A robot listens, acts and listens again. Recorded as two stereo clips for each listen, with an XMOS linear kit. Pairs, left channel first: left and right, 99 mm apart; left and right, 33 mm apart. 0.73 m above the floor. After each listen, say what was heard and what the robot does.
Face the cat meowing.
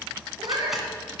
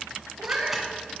The cat meowing: about 50° right or 130° right. Turn 50° right.
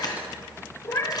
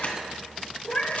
So it is at 35° left. Turn 35° left.
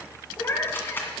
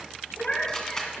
The cat meowing is now 30° left. Turn 30° left.
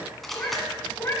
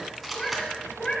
The cat meowing is now 30° left. Turn 30° left.
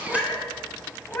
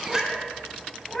The cat meowing is now 20° left. Turn 20° left.
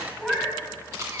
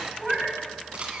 Found it: a cat meowing, straight ahead, 2 to 4 m away.